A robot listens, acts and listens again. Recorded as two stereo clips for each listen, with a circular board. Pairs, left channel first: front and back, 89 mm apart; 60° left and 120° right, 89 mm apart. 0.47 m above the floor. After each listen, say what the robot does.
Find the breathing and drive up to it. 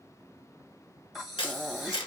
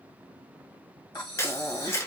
Turn 90° left.
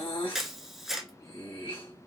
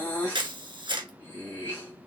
Drive 1.0 m forward.
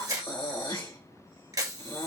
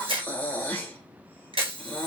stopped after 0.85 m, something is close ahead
I am next to the breathing.